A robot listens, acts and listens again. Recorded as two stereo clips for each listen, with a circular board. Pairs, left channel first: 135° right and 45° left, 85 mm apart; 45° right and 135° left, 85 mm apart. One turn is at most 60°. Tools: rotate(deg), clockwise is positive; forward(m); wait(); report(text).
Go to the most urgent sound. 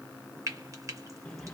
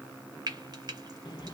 wait()
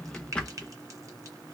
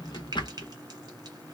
wait()
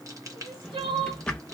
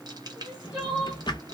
rotate(-55)
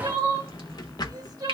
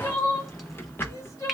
forward(1.0)
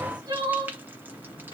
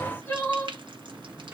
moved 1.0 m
rotate(-20)
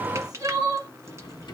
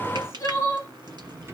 forward(1.0)
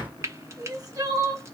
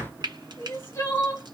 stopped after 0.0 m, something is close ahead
report("Arrived at the crying, straight ahead.")